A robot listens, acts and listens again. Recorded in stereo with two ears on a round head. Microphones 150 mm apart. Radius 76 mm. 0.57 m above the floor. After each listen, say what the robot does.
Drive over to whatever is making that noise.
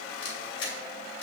Turn 75° left.
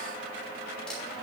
Keep listening.
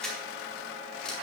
Drive 1.0 m forward.
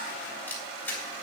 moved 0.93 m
Turn 15° left.
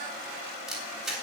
Drive 1.0 m forward.
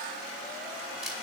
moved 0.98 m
Keep listening.
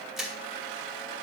Drive 1.0 m forward.
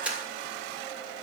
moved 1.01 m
Turn 10° right.
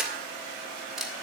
Drive 1.0 m forward.
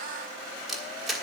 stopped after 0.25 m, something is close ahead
Arrived at the camera shutter, straight ahead.